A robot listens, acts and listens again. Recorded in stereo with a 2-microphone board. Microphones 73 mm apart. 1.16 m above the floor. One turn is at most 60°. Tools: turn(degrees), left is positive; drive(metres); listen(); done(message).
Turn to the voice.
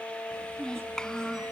turn(degrees=30)
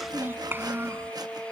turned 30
turn(degrees=-30)
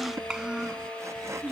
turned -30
turn(degrees=-15)
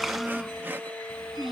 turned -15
done("Found it: a child speaking, straight ahead.")